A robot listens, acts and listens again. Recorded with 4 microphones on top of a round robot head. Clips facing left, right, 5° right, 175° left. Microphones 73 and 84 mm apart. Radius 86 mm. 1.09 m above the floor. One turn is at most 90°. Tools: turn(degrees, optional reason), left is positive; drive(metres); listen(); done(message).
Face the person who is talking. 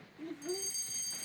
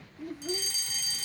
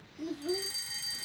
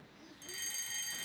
done("Facing the child speaking.")